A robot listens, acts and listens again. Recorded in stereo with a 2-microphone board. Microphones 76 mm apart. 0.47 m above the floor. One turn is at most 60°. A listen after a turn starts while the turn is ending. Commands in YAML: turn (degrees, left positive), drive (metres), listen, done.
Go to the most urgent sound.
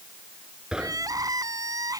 turn: -50
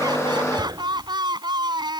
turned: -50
turn: -60
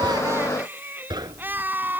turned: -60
turn: -25
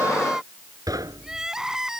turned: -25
drive: 1.0
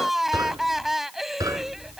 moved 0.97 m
drive: 1.0
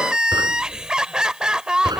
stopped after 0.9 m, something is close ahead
turn: -10
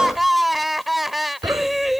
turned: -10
done: "Arrived at the crying, straight ahead."